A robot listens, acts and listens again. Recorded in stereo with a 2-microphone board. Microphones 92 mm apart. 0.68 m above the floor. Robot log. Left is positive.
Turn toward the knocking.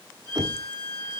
note: The knocking: about 50° right or 130° right.
cmd yaw -50
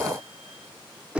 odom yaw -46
note: So it is at 15° right.
cmd yaw -15
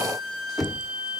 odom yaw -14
end: Facing the knocking, 1 to 2 m away.